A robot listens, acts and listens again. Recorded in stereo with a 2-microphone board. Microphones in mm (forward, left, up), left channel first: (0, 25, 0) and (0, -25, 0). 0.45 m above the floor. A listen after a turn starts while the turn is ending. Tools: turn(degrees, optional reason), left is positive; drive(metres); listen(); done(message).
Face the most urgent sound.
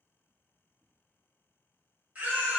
turn(degrees=-30, reason="The baby crying: about 30° right or 150° right.")
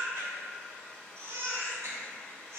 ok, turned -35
turn(degrees=-110, reason="So it is at 110° right.")
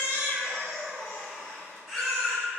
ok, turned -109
done("Facing the baby crying, 1 to 2 m away.")